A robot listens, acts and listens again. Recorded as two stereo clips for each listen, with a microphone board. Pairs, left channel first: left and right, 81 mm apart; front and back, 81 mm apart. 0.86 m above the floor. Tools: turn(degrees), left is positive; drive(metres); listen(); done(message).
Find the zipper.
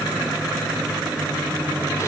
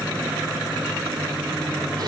listen()
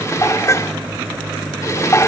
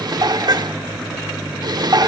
listen()
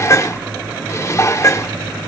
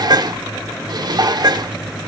done("I can't make out a zipper, only dishes clattering.")